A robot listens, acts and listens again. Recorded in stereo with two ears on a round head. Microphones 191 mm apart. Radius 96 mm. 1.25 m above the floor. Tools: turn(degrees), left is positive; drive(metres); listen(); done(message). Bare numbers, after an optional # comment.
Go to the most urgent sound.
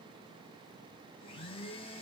listen()
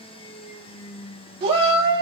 # The shout: about 25° right or 155° right.
turn(-25)
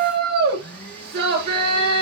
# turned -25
# So it is at 130° right.
turn(-130)
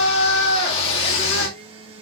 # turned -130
# The shout is now 25° left.
turn(25)
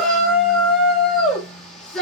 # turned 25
drive(1.0)
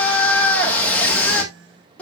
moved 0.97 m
drive(1.0)
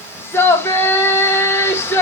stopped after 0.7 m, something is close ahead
# The shout is now 10° left.
turn(10)
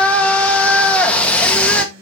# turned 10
done("Arrived at the shout, straight ahead.")